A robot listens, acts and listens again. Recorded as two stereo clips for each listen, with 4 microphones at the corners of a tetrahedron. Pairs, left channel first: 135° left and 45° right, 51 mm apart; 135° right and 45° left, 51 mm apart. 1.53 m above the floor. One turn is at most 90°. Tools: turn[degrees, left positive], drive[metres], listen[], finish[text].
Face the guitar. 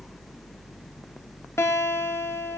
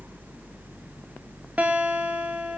Thought: The guitar: 105° left.
Action: turn[90]
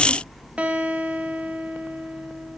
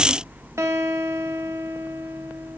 Thought: The guitar is now 20° left.
Action: turn[20]
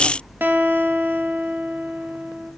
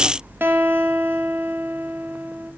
Action: finish[Facing the guitar, 2 to 4 m away.]